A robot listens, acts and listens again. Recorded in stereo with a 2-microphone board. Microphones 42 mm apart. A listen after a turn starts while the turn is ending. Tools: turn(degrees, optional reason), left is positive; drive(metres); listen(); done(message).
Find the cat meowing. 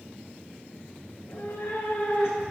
turn(degrees=90)
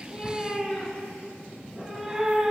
turn(degrees=-15, reason="So it is at 15° right.")
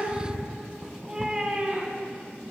turn(degrees=-25, reason="The cat meowing is now 25° right.")
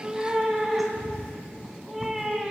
turn(degrees=-10, reason="The cat meowing is now 10° right.")
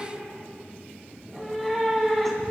done("Found it: a cat meowing, straight ahead.")